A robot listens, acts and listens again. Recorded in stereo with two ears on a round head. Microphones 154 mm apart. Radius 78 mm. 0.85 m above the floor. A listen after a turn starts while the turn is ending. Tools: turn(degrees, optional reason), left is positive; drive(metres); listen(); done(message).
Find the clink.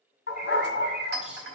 turn(degrees=-65, reason="The clink: about 65° right or 115° right.")
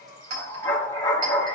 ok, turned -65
listen()
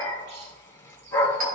listen()
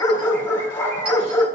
done("I heard a clink, but can't make it out now. It was about straight ahead or 50° right.")